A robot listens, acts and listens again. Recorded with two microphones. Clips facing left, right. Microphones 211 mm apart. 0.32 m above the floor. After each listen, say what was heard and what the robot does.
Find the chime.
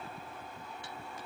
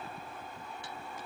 Keep listening.
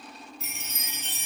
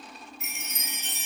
The chime: about 35° left or 145° left. Turn 35° left.
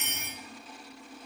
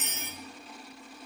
So it is at 110° left. Turn 110° left.
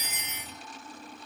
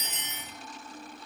The chime is now 10° left. Turn 10° left.
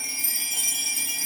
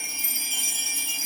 Facing the chime.